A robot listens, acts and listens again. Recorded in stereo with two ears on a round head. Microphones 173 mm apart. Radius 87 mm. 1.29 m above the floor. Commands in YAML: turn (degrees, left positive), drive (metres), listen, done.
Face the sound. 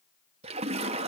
turn: -30
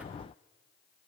listen: true
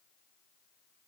done: "I heard a splash, but can't make it out now. It was about straight ahead or 120° right."